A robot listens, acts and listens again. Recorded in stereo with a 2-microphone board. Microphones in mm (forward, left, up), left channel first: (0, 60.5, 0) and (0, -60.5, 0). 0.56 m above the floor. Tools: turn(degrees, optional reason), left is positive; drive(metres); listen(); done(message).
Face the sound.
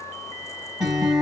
turn(degrees=-30)
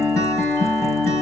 turn(degrees=25, reason="So it is at 25° left.")
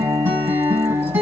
turn(degrees=-20, reason="The guitar is now 20° right.")
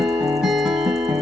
done("Facing the guitar.")